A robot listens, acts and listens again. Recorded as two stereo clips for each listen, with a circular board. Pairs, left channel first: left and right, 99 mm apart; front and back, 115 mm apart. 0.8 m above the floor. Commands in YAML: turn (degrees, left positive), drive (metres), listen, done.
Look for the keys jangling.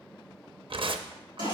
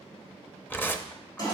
listen: true
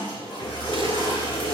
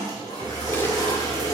turn: 125
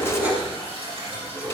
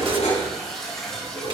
turn: -20
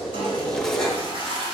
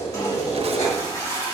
done: "Facing the keys jangling, over 4 m away."